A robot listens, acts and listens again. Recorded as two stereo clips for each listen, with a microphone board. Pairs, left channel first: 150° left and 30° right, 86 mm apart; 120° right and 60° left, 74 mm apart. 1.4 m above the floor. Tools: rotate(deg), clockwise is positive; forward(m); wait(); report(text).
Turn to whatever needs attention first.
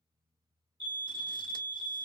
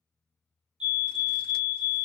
rotate(20)
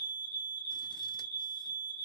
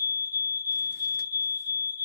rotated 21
report("Found it: a fire alarm, straight ahead, 1 to 2 m away.")